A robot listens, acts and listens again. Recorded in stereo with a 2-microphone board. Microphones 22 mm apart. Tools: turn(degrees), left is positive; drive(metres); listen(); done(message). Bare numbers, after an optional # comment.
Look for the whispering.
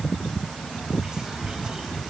# The whispering: about 25° right or 155° right.
turn(-25)
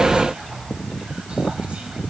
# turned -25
listen()
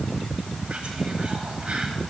listen()
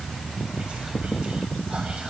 # So it is at 125° right.
turn(-125)
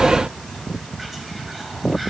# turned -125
listen()
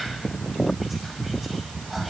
# The whispering is now 10° right.
turn(-10)
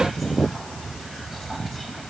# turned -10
done("Found it: whispering, straight ahead.")